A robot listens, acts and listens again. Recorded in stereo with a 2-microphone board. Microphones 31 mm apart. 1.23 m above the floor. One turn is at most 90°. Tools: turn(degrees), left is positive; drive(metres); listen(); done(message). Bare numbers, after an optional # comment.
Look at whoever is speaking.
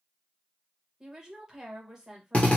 # The woman speaking: about 15° right or 165° right.
turn(-15)
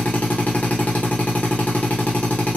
listen()
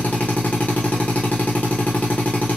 listen()
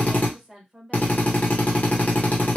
done("Found it: a woman speaking, straight ahead, 1 to 2 m away.")